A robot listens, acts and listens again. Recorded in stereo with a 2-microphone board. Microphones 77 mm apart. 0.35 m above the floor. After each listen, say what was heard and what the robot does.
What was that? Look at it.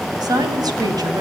The woman speaking: about 55° right or 125° right. Turn 55° right.
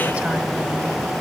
Keep listening.
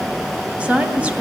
So it is at 20° right. Turn 20° right.
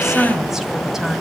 Found it: a woman speaking, straight ahead, 2 to 4 m away.